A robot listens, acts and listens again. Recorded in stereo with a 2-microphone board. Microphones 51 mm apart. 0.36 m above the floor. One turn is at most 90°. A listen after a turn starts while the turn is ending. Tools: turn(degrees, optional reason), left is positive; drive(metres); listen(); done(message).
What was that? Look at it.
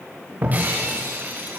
turn(degrees=-35, reason="The breaking glass: about 35° right or 145° right.")
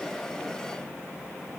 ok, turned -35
listen()
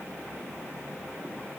done("I heard breaking glass, but can't make it out now. It was about straight ahead or 110° right.")